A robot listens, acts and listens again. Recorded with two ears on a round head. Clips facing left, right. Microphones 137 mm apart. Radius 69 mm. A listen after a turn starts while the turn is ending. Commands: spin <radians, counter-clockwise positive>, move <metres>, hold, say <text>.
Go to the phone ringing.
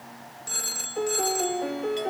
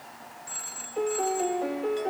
spin 1.05
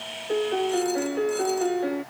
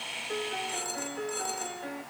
hold
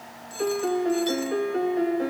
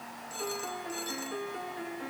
move 1.0
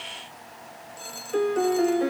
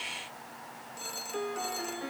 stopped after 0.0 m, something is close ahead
say Blocked. The phone ringing is further on, straight ahead.